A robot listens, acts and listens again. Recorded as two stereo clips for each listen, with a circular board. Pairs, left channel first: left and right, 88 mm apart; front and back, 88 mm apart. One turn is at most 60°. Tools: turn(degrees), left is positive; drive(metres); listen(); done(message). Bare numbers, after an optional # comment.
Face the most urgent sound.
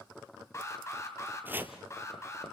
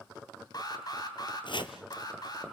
# The alarm: 40° left.
turn(40)
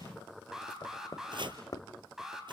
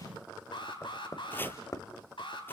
done("Found it: an alarm, straight ahead.")